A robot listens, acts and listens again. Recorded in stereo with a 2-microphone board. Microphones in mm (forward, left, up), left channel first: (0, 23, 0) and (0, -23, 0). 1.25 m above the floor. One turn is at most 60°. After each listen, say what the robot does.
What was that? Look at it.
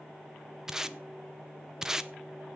Turn 30° right.
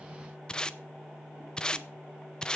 Turn 20° left.
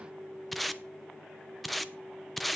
Found it: tape being pulled, straight ahead, under 1 m away.